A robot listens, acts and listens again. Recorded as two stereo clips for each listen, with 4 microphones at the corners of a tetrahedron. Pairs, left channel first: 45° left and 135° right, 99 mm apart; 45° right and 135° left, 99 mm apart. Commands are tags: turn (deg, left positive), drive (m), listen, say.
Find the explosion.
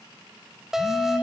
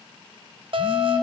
<listen/>
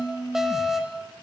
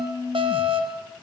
<listen/>
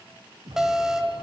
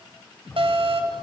<turn deg="-115"/>
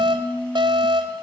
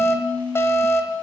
<say>I heard an explosion from this way, but can't make it out now.</say>